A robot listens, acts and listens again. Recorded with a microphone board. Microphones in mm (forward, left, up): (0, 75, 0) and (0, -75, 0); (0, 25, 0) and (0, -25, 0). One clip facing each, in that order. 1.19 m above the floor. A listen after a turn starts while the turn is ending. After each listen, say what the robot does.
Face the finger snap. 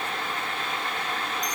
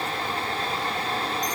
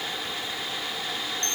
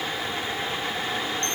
Keep listening.
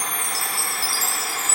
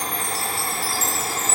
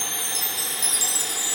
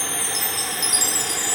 Keep listening.
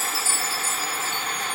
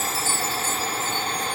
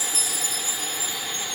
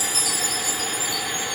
I can't make out a finger snap to turn to.